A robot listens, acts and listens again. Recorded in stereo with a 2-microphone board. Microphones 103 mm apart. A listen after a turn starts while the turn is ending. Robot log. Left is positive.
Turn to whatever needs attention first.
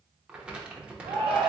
note: The shout: about 60° right or 120° right.
cmd yaw -60
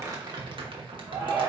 note: So it is at 20° right.
cmd yaw -20
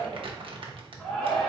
end: Facing the shout, 1 to 2 m away.